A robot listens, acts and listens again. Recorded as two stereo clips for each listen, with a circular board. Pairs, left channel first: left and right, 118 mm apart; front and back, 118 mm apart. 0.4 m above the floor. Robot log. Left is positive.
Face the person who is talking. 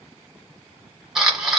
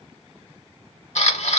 cmd idle
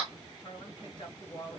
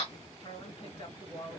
note: The woman speaking: 40° left.
cmd yaw +40
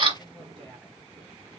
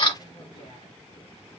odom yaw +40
cmd idle
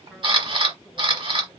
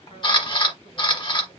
cmd idle
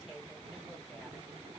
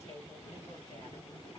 end: Facing the woman speaking.